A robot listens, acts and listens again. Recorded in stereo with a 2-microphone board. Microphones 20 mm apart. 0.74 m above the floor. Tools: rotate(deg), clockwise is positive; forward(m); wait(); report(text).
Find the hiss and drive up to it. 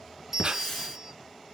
rotate(-15)
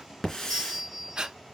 rotate(-150)
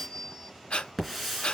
forward(1.0)
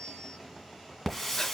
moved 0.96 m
rotate(-10)
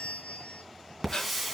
forward(1.0)
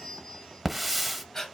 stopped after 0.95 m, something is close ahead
rotate(10)
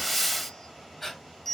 report("Arrived at the hiss, straight ahead.")